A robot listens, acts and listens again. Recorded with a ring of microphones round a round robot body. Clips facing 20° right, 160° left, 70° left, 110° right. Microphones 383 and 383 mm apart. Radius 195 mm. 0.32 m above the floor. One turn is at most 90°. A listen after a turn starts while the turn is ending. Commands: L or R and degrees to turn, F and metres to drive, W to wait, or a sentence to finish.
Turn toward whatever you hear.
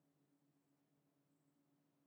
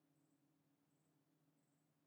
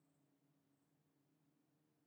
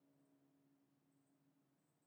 W
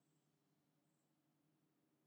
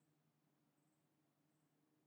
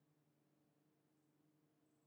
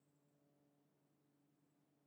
W
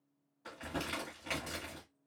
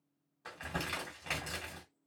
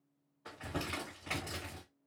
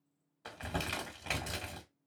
R90
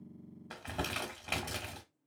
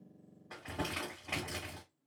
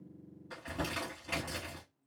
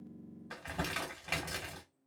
R45
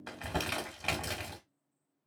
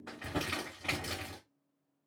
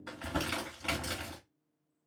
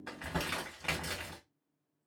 R25
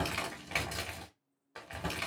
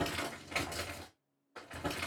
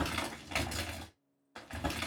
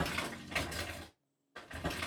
Facing the crumpling, 1 to 2 m away.